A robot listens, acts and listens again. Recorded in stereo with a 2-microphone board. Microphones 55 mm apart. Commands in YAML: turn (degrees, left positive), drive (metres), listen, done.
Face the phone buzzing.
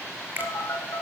turn: 60
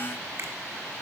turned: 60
listen: true
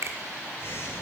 turn: 50
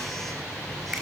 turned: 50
done: "Facing the phone buzzing, 2 to 4 m away."